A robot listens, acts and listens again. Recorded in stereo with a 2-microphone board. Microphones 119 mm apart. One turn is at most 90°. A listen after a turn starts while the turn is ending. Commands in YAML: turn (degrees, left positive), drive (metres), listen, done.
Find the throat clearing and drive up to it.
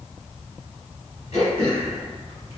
turn: 70
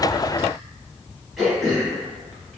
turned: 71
drive: 1.0
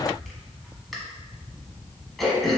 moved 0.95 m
drive: 1.0
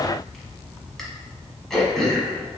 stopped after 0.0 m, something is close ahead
done: "I am next to the throat clearing."